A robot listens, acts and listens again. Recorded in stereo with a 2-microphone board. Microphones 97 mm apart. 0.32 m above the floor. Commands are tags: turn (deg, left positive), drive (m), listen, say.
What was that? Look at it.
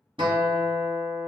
<turn deg="-60"/>
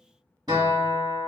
<turn deg="-50"/>
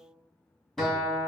<say>Found it: a guitar, straight ahead, 1 to 2 m away.</say>